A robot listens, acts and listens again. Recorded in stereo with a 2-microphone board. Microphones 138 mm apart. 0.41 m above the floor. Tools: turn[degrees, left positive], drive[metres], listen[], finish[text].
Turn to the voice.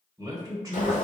Thought: The man speaking: about 25° right or 155° right.
Action: turn[-25]
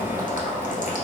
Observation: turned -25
Action: listen[]
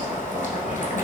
Action: listen[]
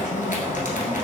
Action: finish[I heard a man speaking, but can't make it out now. It was about straight ahead or 130° right.]